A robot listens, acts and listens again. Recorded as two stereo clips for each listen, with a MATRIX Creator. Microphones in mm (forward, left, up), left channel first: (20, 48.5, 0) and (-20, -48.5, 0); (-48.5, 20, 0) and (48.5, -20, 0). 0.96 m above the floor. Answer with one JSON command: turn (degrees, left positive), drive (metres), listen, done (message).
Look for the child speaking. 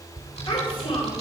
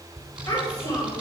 {"turn": 100}
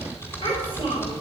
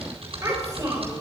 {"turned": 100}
{"turn": 35}
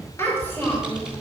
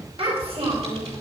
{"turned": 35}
{"done": "Found it: a child speaking, straight ahead, 2 to 4 m away."}